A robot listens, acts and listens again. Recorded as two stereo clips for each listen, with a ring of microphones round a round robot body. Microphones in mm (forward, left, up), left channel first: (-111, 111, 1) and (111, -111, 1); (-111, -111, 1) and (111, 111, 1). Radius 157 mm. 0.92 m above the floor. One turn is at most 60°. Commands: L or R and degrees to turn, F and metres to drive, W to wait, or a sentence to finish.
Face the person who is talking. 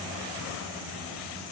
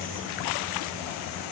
W
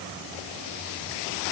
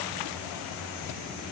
W
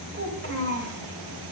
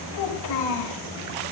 R60
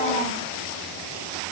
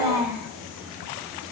R40
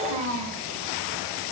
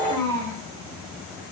Found it: a child speaking, straight ahead, over 4 m away.